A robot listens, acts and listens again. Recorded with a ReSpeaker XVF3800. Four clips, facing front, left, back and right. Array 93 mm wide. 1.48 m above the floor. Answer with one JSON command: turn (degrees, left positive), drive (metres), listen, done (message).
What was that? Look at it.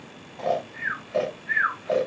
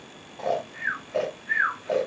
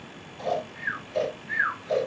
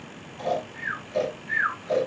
{"turn": 40}
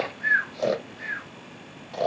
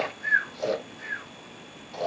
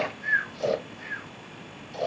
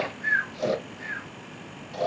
{"done": "Found it: snoring, straight ahead."}